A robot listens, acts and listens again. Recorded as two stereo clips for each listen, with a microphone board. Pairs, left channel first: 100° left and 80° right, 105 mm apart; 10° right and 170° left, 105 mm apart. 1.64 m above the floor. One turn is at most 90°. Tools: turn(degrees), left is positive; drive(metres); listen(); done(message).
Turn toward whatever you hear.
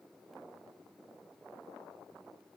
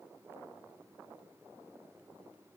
listen()
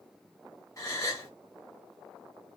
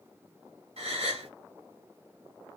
turn(degrees=90)
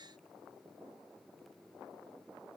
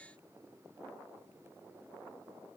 turn(degrees=65)
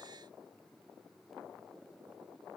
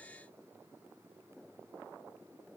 done("I heard a gasp from this way, but can't make it out now.")